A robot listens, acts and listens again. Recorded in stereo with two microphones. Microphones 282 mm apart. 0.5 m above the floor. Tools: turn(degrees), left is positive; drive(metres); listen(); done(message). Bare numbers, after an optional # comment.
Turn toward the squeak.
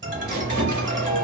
# The squeak: about 70° right or 110° right.
turn(-70)
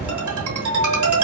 listen()
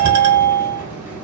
listen()
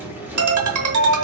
done("Facing the squeak, under 1 m away.")